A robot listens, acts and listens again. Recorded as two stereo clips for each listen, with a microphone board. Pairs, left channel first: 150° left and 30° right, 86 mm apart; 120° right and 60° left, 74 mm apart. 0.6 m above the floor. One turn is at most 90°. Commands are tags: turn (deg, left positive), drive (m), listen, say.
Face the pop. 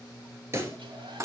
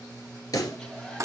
<turn deg="-85"/>
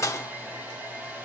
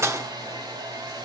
<say>I heard a pop from this way, but can't make it out now.</say>